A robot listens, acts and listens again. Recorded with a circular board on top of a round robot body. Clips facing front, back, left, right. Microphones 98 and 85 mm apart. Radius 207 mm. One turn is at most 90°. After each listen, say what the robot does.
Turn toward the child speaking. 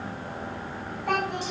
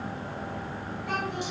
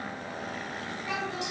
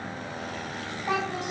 Turn 40° right.
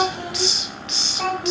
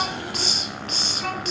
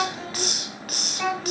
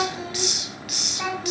Found it: a child speaking, straight ahead, over 4 m away.